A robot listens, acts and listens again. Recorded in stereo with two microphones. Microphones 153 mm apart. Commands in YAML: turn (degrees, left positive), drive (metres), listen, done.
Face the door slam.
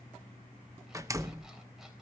turn: -20
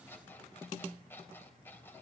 listen: true
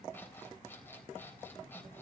done: "I heard a door slam, but can't make it out now. It was about straight ahead or 140° right."